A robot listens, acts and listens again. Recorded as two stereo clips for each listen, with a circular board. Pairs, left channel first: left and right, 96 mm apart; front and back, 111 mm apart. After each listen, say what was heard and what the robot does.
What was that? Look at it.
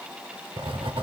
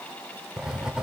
The writing: 95° right. Turn 95° right.
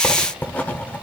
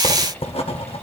The writing is now 15° left. Turn 15° left.
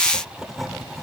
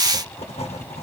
Facing the writing, 1 to 2 m away.